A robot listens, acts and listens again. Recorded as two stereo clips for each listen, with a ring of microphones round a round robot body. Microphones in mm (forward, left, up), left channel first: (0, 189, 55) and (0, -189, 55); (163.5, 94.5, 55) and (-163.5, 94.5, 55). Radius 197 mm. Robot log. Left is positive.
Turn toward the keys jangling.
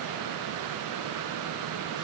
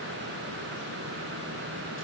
cmd idle
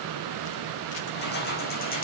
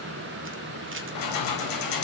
note: The keys jangling: 20° left.
cmd yaw +20
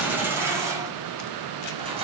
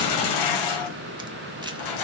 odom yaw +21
note: The keys jangling is now 15° right.
cmd yaw -15
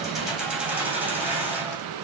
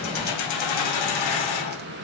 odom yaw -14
end: Facing the keys jangling.